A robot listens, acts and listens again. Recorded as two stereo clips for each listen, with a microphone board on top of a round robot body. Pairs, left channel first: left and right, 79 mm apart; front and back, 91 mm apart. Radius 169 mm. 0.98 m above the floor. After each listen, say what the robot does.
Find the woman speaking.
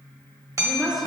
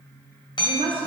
Turn 180° left.
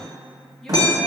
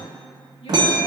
Keep listening.
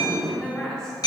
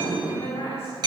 Turn 10° left.
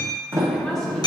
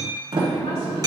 Keep listening.
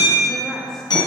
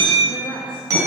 Found it: a woman speaking, straight ahead.